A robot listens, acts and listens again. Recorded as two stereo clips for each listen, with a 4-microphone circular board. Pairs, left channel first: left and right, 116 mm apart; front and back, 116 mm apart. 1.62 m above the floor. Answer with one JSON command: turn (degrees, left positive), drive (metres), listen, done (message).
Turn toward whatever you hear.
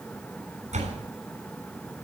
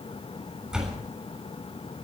{"turn": -95}
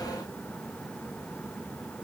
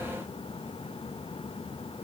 {"done": "Facing where the door slam came from. I can't hear it now."}